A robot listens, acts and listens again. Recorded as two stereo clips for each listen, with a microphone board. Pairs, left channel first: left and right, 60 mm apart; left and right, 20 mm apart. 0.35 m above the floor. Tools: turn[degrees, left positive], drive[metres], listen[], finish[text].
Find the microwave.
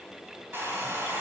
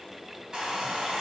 Action: listen[]
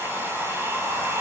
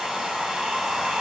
Action: listen[]
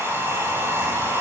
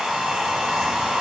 Action: finish[I can't make out a microwave to turn to.]